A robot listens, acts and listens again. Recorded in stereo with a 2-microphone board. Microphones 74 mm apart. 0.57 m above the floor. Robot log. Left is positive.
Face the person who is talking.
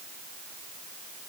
cmd idle
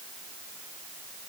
cmd idle
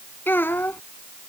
note: The child speaking: about 30° left or 150° left.
cmd yaw +30
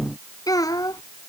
note: So it is at 120° left.
cmd yaw +120
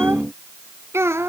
note: The child speaking is now 40° right.
cmd yaw -40
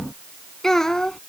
end: Facing the child speaking.